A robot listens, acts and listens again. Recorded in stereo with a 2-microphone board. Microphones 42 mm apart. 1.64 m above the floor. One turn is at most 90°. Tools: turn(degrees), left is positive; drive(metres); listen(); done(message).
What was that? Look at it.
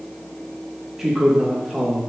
turn(degrees=30)
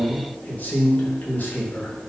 turn(degrees=90)
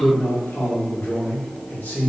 turn(degrees=50)
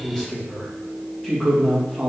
turn(degrees=10)
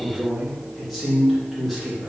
done("Facing the man speaking.")